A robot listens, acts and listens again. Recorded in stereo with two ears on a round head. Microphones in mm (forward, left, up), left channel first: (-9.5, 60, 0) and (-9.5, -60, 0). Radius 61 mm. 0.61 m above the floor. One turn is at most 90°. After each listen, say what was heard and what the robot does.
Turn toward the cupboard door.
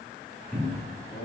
Turn 30° left.
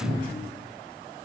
So it is at 30° right. Turn 30° right.
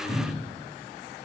Found it: a cupboard door, straight ahead.